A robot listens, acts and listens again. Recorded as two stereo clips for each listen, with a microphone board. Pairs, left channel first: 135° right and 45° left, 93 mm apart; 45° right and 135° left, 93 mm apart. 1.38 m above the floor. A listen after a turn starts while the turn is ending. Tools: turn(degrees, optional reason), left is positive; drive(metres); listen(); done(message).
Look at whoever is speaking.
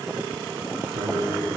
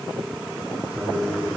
turn(degrees=65, reason="The man speaking: 65° left.")
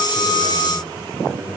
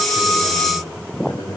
turn(degrees=-30, reason="The man speaking is now 30° right.")
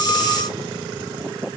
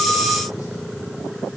listen()
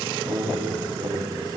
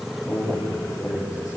done("Found it: a man speaking, straight ahead, over 4 m away.")